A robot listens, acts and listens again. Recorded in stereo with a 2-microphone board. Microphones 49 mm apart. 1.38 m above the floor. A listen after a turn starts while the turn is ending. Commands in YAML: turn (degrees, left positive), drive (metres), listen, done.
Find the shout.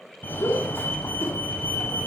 turn: 55
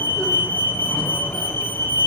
listen: true
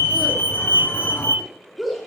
done: "Found it: a shout, straight ahead, 2 to 4 m away."